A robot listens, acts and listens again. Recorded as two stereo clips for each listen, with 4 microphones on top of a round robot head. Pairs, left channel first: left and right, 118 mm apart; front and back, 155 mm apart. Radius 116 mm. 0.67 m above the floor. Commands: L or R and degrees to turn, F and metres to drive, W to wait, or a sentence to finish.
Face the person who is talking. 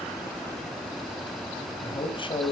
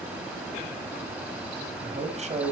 L135
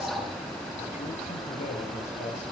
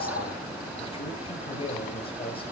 L55
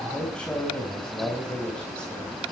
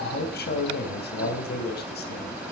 Facing the man speaking.